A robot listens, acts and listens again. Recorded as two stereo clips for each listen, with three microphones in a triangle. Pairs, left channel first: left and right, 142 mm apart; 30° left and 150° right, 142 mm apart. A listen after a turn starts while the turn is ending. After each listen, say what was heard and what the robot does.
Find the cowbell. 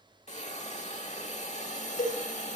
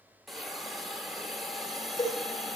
The cowbell: 85° left. Turn 85° left.
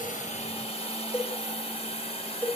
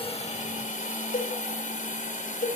The cowbell is now 15° left. Turn 15° left.
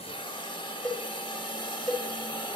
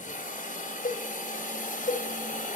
Found it: a cowbell, straight ahead.